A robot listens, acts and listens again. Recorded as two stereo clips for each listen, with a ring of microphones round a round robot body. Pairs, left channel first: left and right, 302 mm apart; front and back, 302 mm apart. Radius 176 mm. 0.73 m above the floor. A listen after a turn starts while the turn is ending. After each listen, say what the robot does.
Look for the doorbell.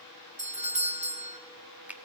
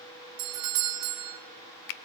Turn 155° right.
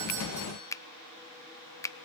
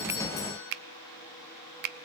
Keep listening.
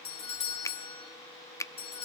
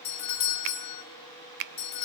Turn 20° left.
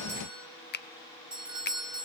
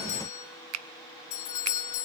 Found it: a doorbell, straight ahead.